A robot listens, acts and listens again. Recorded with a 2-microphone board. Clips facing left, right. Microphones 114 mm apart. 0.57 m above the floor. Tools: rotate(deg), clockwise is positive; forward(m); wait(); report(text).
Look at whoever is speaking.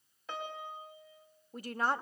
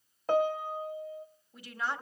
rotate(-45)
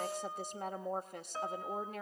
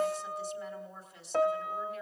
rotate(-80)
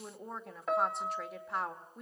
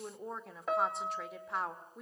report("Found it: a woman speaking, straight ahead, 1 to 2 m away.")